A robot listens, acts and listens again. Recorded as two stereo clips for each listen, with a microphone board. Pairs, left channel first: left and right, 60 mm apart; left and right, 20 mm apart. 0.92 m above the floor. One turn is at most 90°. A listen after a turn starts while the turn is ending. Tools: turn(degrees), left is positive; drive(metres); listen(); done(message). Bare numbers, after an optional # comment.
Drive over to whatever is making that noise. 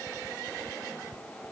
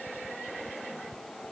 listen()
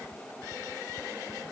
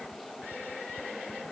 listen()
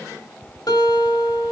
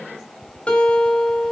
# The guitar: about 75° left or 105° left.
turn(75)
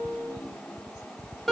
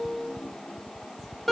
drive(1.0)
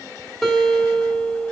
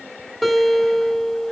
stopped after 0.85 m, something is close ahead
# The guitar is now 10° left.
turn(10)
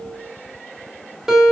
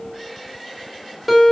done("Blocked. The guitar is further on, straight ahead.")